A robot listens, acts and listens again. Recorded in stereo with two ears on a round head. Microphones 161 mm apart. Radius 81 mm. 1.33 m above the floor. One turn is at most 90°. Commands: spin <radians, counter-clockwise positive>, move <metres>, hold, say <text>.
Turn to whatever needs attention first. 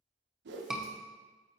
spin -0.52
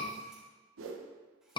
spin 0.44
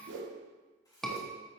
say Found it: a scream, straight ahead.